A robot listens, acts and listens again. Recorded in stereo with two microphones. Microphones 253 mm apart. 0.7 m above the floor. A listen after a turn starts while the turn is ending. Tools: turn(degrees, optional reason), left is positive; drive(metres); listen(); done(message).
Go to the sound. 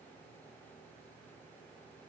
listen()
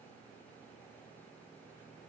listen()
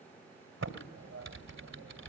turn(degrees=-90)
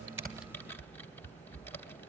turn(degrees=10, reason="So it is at 10° left.")
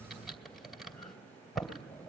drive(metres=1.0)
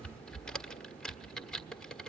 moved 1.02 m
drive(metres=1.0)
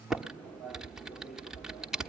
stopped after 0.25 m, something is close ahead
done("Arrived at the typing on a keyboard, straight ahead.")